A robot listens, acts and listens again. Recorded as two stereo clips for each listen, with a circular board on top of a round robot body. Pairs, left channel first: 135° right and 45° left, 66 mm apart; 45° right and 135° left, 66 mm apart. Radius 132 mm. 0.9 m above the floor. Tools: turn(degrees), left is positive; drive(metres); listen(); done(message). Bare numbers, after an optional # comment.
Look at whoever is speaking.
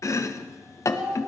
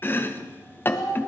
# The child speaking: 30° right.
turn(-30)
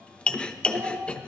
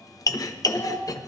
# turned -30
done("Found it: a child speaking, straight ahead.")